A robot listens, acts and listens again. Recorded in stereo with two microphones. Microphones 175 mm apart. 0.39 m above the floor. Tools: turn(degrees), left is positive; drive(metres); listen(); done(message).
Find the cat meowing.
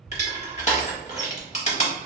listen()
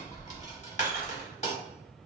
listen()
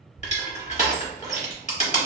done("I can't make out a cat meowing, only crushing.")